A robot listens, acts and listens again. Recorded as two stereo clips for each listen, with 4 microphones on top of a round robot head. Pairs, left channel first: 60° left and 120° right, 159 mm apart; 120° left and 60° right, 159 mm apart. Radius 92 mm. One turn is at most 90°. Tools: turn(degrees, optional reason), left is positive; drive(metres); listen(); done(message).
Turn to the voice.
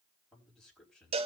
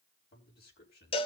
turn(degrees=90, reason="The man speaking: 145° left.")
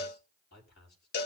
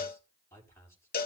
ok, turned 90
turn(degrees=50, reason="The man speaking is now 50° left.")
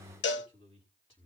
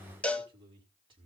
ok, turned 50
done("Found it: a man speaking, straight ahead, over 4 m away.")